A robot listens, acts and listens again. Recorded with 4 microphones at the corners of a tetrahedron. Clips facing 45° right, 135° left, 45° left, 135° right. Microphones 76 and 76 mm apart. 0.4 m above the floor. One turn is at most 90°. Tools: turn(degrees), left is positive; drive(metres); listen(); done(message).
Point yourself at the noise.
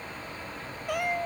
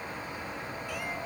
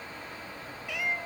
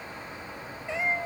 turn(degrees=-75)
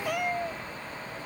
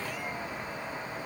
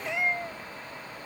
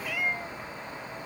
turn(degrees=-20)
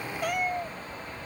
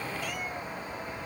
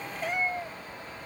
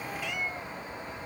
done("Found it: a cat meowing, straight ahead.")